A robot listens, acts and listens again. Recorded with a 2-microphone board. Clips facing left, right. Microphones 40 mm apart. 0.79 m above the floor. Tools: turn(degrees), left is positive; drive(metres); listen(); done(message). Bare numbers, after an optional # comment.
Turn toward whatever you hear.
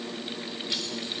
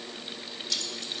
# The keys jangling: about 25° left or 155° left.
turn(25)
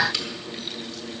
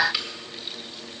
# So it is at 15° right.
turn(-15)
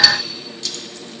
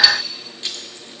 # The keys jangling is now 30° right.
turn(-30)
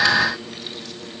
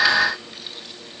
listen()
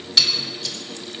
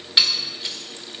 # The keys jangling is now 30° right.
turn(-30)
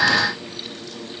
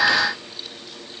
listen()
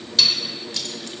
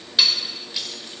# The keys jangling is now 15° right.
turn(-15)
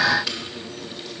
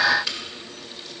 done("Found it: keys jangling, straight ahead.")